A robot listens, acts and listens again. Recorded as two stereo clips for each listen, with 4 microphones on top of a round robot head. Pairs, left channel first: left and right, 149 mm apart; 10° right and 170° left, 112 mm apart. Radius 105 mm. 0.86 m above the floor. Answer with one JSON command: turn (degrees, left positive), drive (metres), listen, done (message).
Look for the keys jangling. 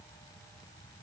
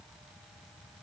{"listen": true}
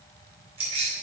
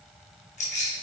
{"turn": -30}
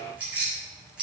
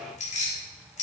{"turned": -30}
{"done": "Facing the keys jangling."}